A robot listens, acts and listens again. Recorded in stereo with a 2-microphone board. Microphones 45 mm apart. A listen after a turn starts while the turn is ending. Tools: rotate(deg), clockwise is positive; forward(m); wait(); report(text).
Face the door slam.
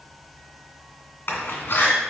rotate(-50)
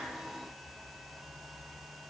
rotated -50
wait()
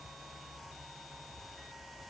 report("I heard a door slam, but can't make it out now. It was about straight ahead or 80° left.")